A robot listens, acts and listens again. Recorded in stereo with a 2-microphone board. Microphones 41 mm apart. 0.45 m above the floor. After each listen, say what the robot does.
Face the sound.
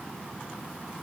Keep listening.
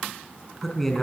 Turn 30° left.
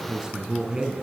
Turn 20° right.
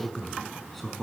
Facing the man speaking, over 4 m away.